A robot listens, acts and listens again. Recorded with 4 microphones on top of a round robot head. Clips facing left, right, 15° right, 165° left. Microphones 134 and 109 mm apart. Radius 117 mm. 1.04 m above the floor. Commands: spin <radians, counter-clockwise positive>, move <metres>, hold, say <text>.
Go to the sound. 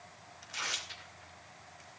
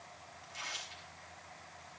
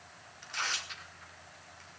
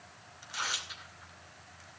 spin 1.48
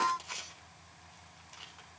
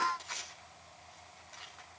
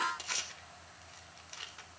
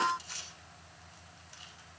spin 0.17
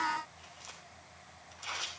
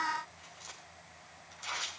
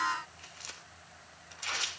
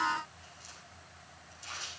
move 1.0
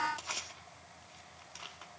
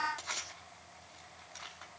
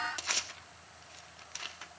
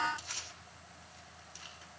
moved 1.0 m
spin 0.17
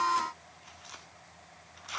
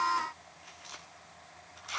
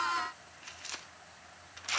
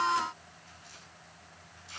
move 1.0
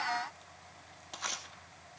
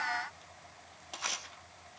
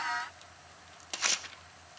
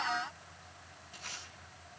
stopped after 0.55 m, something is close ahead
say I am next to the tearing paper.